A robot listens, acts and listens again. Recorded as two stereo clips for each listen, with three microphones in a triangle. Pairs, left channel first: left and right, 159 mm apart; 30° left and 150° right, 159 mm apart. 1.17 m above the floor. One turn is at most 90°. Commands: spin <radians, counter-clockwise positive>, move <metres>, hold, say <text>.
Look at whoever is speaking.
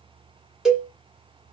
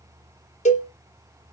hold
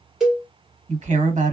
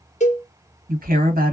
spin -1.57
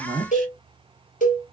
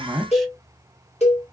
spin -1.05
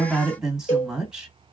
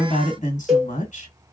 say Facing the woman speaking, 1 to 2 m away.